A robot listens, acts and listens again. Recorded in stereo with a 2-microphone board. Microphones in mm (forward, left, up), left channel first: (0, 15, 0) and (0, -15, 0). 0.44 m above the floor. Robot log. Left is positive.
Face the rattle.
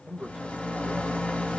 note: The rattle: about 50° left or 130° left.
cmd yaw +50
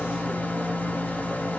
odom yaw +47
note: So it is at 85° left.
cmd yaw +85
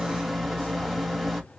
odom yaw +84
end: Found it: a rattle, straight ahead, 1 to 2 m away.